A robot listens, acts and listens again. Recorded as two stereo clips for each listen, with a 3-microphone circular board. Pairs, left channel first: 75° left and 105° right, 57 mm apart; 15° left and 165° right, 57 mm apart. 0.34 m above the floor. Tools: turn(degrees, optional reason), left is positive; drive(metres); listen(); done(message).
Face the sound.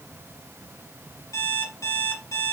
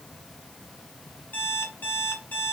turn(degrees=75, reason="The alarm clock: 75° left.")
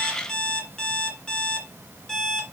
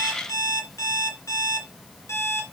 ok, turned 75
done("Found it: an alarm clock, straight ahead, 2 to 4 m away.")